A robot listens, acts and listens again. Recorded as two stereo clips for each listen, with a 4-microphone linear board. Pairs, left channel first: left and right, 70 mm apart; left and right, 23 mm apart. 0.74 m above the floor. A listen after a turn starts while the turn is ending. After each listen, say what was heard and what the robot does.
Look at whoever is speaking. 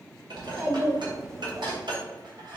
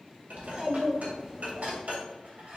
The child speaking: about 35° right or 145° right. Turn 35° right.
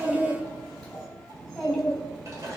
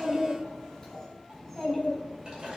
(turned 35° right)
Facing the child speaking, 2 to 4 m away.